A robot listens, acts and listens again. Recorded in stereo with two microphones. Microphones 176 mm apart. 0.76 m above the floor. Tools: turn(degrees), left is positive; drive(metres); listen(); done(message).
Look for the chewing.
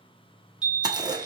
turn(degrees=-25)
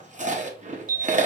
turn(degrees=-130)
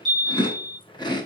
turn(degrees=30)
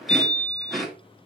done("Facing the chewing.")